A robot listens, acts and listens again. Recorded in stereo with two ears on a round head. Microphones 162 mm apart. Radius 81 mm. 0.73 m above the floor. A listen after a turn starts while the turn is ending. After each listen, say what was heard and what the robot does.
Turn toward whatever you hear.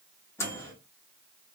Turn 30° left.
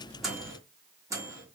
So it is at 20° right. Turn 20° right.
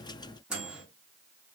Facing the microwave, 1 to 2 m away.